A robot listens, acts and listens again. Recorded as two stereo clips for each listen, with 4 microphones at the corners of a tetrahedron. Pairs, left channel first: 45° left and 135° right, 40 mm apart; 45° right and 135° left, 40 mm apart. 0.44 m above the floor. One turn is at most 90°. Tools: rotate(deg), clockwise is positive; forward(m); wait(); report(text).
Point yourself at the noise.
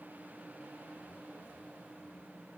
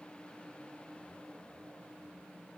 wait()
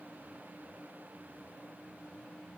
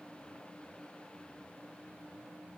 wait()
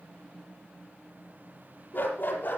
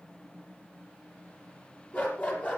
report("Found it: a dog barking, straight ahead.")